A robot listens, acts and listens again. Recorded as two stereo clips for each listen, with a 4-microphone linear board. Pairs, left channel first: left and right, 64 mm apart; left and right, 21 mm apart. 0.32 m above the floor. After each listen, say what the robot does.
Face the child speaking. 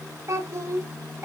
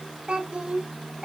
Turn 35° right.
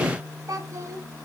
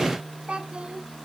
Turn 130° right.
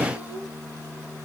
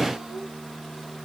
Keep listening.
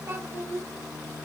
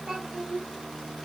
Turn 40° right.
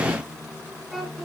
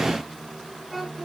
Facing the child speaking.